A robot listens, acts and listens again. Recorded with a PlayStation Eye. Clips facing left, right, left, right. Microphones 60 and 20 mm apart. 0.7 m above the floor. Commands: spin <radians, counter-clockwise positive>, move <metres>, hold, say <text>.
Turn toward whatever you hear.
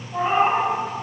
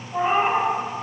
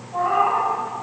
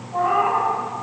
spin -0.52
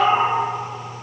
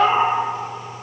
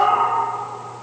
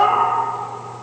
spin -2.53
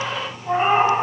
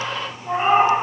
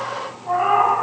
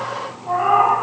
say Found it: a cat meowing, straight ahead, 2 to 4 m away.